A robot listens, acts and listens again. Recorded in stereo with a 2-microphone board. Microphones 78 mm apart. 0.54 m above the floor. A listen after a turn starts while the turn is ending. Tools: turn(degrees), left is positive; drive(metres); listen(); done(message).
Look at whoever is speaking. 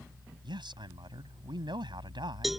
turn(degrees=-90)
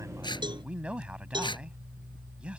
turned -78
turn(degrees=-15)
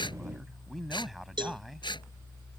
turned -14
done("Found it: a man speaking, straight ahead.")